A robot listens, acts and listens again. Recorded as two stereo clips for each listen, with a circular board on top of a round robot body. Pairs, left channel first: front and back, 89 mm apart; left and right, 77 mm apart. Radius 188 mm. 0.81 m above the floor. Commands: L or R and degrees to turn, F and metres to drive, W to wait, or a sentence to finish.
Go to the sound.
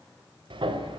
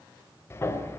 L150
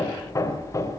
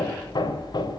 L55
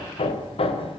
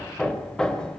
L10
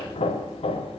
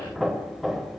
F1.0
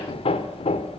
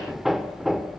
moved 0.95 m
F1.0
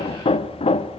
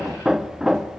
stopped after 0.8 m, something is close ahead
I am next to the hammering.